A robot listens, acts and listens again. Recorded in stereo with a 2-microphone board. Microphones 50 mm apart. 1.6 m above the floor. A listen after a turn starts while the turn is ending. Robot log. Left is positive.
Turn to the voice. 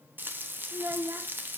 note: The child speaking: about 65° right or 115° right.
cmd yaw -65
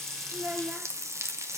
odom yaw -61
note: So it is at 35° right.
cmd yaw -35
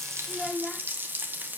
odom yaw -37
end: Found it: a child speaking, straight ahead, under 1 m away.